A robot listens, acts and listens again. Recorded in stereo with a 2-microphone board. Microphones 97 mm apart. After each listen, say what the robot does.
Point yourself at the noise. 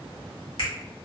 Turn 65° left.
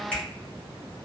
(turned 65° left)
Turn 15° left.
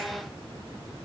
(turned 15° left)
Keep listening.
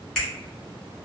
Facing the finger snap.